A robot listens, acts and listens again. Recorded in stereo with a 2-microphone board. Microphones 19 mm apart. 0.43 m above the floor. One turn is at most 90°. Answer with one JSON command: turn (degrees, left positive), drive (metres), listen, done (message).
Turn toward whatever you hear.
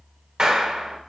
{"turn": -45}
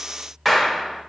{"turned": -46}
{"turn": -15}
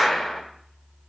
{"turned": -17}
{"done": "Facing the clap, 1 to 2 m away."}